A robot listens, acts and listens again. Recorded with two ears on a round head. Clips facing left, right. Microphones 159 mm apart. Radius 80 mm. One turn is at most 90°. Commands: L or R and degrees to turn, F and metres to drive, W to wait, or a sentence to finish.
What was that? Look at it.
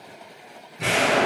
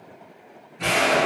L30
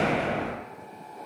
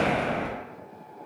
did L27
R20
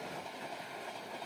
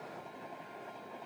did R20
Facing where the explosion came from. I can't hear it now.